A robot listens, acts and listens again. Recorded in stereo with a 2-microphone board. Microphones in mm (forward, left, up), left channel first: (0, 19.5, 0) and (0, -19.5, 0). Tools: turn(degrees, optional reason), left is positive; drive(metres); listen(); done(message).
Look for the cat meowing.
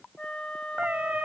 turn(degrees=-40, reason="The cat meowing: about 40° right or 140° right.")
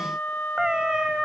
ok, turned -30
turn(degrees=-20, reason="So it is at 20° right.")
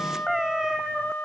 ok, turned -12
turn(degrees=-10, reason="The cat meowing is now 10° right.")
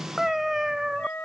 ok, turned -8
turn(degrees=-10, reason="The cat meowing is now 10° right.")
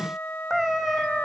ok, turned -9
done("Found it: a cat meowing, straight ahead.")